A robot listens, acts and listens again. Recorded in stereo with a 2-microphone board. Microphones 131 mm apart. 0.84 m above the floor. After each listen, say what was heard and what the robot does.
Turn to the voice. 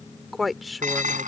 Turn 30° left.
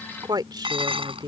So it is at 30° right. Turn 30° right.
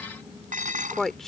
Facing the woman speaking.